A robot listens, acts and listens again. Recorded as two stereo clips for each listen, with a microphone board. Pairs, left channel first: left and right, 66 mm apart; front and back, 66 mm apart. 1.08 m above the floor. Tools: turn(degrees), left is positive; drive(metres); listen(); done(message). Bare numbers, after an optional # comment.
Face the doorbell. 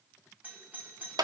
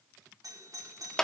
# The doorbell: 155° right.
turn(-155)
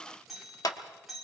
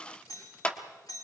done("Facing the doorbell, over 4 m away.")